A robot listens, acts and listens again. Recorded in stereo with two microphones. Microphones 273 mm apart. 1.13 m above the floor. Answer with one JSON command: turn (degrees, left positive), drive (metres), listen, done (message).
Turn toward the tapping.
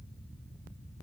{"listen": true}
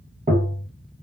{"turn": -30}
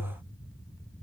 {"turn": -120}
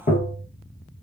{"turn": 35}
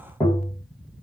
{"turn": 10}
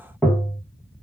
{"done": "Facing the tapping."}